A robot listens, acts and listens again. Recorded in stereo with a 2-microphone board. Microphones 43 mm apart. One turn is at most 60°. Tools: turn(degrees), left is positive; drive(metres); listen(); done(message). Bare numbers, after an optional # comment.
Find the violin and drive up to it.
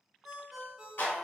listen()
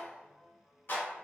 listen()
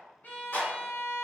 # The violin: about 45° left or 135° left.
turn(45)
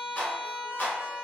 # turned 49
drive(1.0)
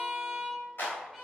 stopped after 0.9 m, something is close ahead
done("Arrived at the violin, straight ahead.")